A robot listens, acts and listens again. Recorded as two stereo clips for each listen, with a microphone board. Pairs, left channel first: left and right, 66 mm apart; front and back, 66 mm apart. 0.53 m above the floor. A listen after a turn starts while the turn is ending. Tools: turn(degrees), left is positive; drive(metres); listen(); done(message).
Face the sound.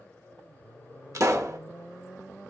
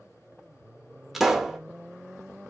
turn(degrees=-95)
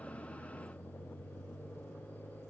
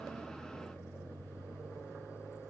done("Facing where the pop came from. I can't hear it now.")